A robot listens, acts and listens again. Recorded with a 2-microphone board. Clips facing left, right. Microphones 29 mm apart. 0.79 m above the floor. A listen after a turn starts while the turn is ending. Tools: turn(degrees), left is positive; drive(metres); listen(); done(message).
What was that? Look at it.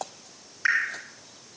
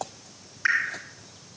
turn(degrees=30)
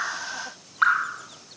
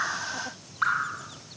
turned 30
turn(degrees=150)
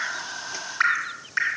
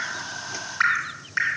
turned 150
done("Found it: dripping, straight ahead.")